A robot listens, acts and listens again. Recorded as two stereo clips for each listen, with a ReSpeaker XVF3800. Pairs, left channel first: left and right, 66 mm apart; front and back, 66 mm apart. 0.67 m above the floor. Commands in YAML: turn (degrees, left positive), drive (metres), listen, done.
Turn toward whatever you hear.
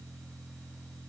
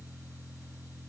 listen: true
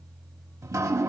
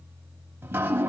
turn: -125
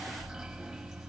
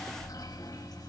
done: "Facing the dripping, 2 to 4 m away."